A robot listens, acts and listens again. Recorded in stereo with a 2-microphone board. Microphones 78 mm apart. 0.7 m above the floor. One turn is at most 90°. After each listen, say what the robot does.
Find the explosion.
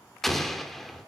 Turn 30° left.
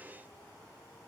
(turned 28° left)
Keep listening.
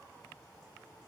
I heard an explosion, but can't make it out now. It was about 25° right or 150° left.